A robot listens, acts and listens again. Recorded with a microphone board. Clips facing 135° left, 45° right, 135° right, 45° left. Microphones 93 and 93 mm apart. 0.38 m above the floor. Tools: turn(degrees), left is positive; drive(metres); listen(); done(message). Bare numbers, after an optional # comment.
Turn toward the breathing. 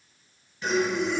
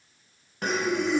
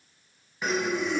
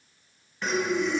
# The breathing: 55° right.
turn(-55)
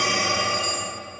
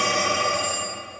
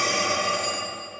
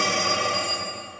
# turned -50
done("Found it: breathing, straight ahead.")